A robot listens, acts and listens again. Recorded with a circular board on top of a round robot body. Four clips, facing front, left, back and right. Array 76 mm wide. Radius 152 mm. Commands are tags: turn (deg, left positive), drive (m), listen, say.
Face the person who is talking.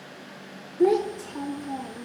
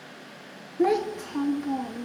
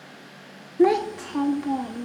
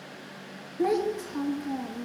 <turn deg="165"/>
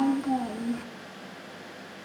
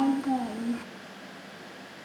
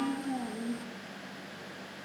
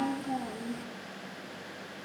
<turn deg="50"/>
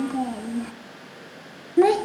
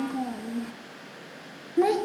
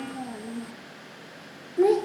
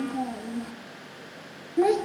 <say>Facing the child speaking, 1 to 2 m away.</say>